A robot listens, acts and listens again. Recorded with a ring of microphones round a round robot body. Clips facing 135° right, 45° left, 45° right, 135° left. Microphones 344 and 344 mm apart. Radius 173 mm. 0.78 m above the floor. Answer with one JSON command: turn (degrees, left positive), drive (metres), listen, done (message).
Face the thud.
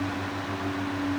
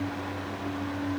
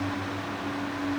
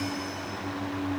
{"listen": true}
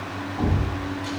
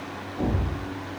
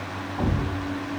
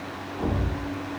{"turn": -60}
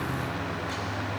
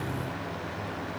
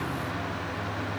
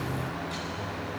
{"done": "I heard a thud from this way, but can't make it out now."}